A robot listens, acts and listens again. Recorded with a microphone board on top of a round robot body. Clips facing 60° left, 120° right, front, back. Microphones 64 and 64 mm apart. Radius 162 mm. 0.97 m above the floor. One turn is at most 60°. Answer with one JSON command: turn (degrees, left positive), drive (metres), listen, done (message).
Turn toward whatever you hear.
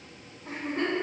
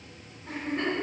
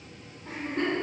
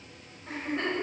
{"turn": 40}
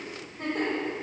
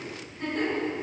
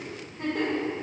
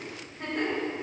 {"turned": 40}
{"turn": 15}
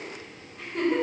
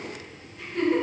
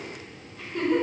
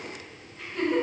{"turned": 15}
{"done": "Facing the giggle."}